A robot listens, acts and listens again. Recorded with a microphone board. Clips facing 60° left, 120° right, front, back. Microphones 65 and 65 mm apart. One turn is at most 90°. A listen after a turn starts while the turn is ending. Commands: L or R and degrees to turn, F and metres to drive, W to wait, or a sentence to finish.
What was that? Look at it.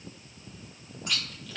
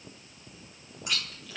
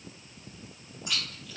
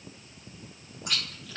L90
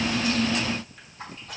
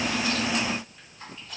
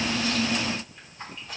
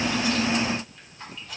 L60
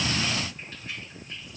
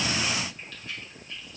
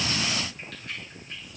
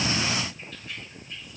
Found it: chewing, straight ahead.